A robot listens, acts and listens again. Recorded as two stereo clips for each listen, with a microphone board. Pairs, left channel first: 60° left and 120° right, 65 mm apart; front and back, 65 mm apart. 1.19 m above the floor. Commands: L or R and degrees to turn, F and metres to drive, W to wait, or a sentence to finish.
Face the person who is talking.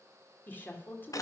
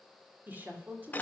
L120
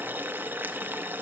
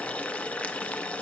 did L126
W
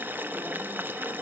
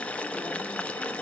W
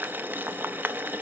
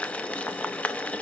Facing where the woman speaking came from. I can't hear it now.